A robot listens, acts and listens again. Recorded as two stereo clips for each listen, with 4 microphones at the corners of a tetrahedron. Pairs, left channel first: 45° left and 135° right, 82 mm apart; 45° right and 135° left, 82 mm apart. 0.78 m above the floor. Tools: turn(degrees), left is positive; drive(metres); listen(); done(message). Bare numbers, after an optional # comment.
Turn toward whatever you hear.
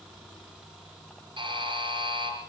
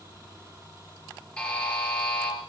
# The buzzer: 125° right.
turn(-125)
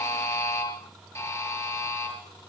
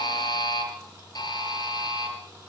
# The buzzer is now 15° right.
turn(-15)
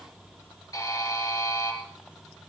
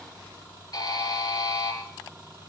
done("Facing the buzzer.")